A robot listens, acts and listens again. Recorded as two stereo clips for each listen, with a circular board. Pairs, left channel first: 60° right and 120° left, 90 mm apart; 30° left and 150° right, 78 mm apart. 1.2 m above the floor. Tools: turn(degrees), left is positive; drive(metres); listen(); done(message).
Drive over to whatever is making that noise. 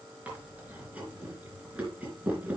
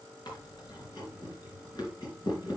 turn(degrees=45)
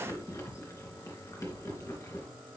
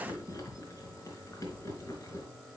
turn(degrees=-10)
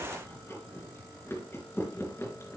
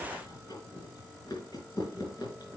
drive(metres=1.0)
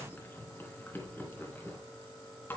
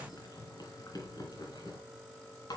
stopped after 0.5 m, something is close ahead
done("Blocked. The chewing is further on, straight ahead.")